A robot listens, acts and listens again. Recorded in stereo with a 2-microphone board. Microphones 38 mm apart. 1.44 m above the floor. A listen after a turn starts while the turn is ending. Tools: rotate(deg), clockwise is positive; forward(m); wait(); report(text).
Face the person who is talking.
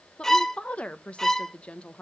rotate(-30)
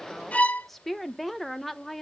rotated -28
report("Facing the woman speaking, 1 to 2 m away.")